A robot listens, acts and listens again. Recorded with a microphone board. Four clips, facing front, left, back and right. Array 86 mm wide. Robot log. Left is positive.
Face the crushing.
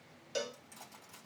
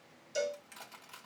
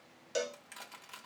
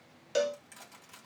note: The crushing: 170° left.
cmd yaw +170
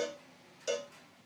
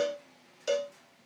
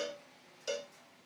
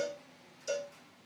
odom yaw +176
cmd idle
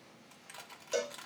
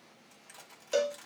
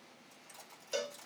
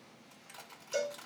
note: The crushing is now 10° right.
cmd yaw -10
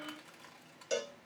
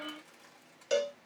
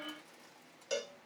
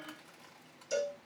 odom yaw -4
cmd idle
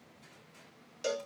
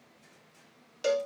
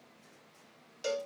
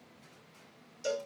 cmd idle
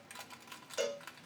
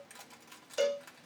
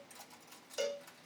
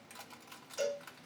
end: Facing the crushing, 1 to 2 m away.